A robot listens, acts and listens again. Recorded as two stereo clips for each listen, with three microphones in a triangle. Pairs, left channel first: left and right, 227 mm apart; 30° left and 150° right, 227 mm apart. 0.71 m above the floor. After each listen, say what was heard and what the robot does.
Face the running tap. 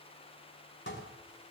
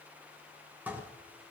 Keep listening.
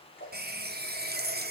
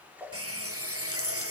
The running tap: 140° right. Turn 140° right.
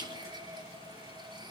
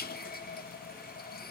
The running tap is now 20° right. Turn 20° right.
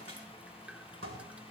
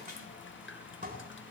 Found it: a running tap, straight ahead, under 1 m away.